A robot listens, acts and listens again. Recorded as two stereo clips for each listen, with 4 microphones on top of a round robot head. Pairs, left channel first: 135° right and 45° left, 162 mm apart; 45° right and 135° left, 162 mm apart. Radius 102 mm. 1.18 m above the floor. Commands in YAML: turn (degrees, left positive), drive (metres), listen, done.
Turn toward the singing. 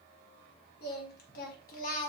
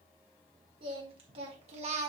turn: -175
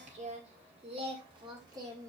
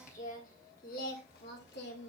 turn: -25
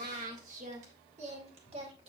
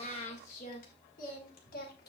turn: -10
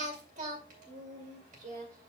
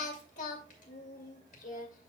done: "Facing the singing."